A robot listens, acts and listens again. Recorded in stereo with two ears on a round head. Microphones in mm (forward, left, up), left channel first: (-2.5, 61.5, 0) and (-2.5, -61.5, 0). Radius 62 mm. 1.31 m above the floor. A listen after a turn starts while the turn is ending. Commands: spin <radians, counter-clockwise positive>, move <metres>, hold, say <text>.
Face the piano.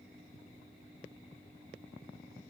hold
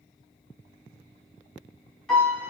spin 0.52
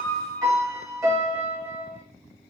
spin -0.44
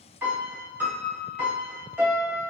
spin -0.26
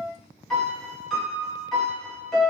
say Facing the piano.